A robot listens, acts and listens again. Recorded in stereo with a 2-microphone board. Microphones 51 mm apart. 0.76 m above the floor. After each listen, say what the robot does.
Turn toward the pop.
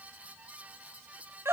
Keep listening.
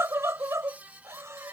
Keep listening.
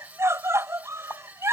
Turn 50° left.
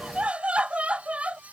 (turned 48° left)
Keep listening.
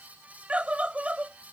I heard a pop, but can't make it out now. It was about straight ahead or 85° left.